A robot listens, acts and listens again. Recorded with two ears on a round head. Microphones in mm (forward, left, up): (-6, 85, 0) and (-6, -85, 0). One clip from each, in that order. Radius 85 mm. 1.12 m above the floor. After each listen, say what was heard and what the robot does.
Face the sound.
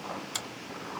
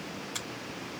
The finger snap: about 45° left or 135° left. Turn 45° left.
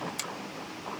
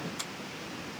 Keep listening.
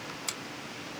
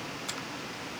So it is at 90° left. Turn 90° left.
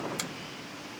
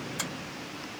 Keep listening.
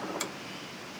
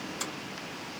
Keep listening.
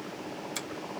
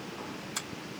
The finger snap is now 25° left. Turn 25° left.
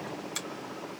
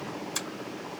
Found it: a finger snap, straight ahead.